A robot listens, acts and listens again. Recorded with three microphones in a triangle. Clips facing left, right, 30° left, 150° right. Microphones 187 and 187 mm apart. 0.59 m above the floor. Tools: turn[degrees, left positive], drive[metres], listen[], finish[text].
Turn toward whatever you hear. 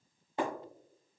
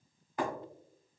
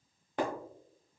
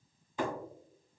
Thought: The breaking glass: 30° left.
Action: turn[30]
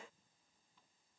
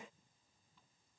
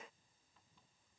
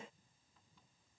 Action: finish[Facing where the breaking glass came from. I can't hear it now.]